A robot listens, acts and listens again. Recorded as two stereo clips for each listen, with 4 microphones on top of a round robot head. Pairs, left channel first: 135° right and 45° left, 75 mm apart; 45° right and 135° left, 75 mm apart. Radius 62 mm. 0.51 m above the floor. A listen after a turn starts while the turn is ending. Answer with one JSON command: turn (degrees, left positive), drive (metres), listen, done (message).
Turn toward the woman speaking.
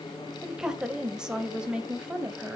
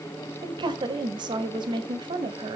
{"turn": 125}
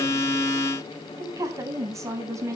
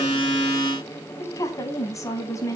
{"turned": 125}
{"done": "Facing the woman speaking, over 4 m away."}